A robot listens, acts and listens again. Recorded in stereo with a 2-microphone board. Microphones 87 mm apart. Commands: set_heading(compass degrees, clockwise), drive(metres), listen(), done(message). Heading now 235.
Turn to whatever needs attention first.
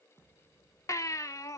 set_heading(195)
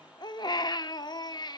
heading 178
set_heading(103)
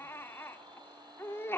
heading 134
set_heading(99)
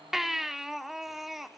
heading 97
done("Facing the baby crying.")